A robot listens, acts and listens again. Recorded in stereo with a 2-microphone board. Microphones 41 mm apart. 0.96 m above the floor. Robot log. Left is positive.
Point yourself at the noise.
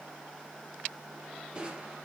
note: The crushing: about 25° right or 155° right.
cmd yaw -25
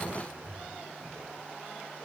note: So it is at 130° right.
cmd yaw -130
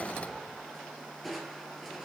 end: Facing the crushing, 2 to 4 m away.